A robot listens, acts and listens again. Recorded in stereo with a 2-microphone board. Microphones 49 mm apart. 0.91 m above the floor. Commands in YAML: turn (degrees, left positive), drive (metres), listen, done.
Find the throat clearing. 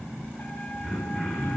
turn: -30
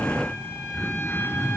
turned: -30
turn: 20
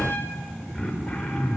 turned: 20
done: "Found it: throat clearing, straight ahead, over 4 m away."